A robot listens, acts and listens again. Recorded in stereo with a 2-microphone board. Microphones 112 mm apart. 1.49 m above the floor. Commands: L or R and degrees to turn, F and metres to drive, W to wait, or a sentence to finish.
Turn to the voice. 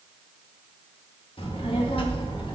L50
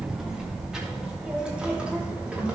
R10
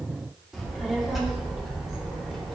Found it: a child speaking, straight ahead.